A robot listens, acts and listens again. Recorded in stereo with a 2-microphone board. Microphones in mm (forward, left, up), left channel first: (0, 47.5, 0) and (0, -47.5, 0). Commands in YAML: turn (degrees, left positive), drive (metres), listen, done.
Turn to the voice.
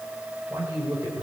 turn: -30
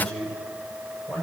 done: "Facing the man speaking."